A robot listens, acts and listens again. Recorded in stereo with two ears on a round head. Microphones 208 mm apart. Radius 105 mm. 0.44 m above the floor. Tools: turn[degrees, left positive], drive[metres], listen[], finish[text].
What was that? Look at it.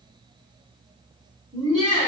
Thought: The laughter: about 30° right or 150° right.
Action: turn[-30]
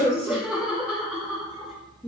Action: finish[Found it: laughter, straight ahead.]